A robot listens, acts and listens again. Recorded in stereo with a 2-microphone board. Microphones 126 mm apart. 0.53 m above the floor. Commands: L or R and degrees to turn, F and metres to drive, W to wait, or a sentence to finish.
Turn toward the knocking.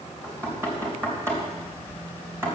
R20
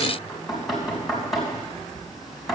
Found it: knocking, straight ahead.